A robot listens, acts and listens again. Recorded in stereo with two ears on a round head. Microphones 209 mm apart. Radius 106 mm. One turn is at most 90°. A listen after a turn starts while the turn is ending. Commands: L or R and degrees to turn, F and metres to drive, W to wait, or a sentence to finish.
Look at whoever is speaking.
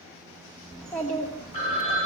L30
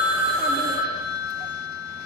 W
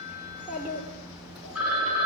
L30
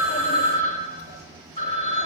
W
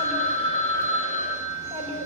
R25
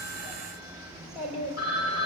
Facing the child speaking.